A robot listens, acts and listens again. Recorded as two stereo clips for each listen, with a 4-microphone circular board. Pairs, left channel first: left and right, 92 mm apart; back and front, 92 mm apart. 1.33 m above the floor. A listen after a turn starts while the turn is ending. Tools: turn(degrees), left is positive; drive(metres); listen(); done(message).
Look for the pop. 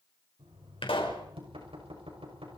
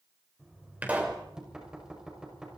turn(degrees=75)
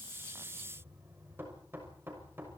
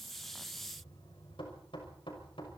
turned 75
done("Facing where the pop came from. I can't hear it now.")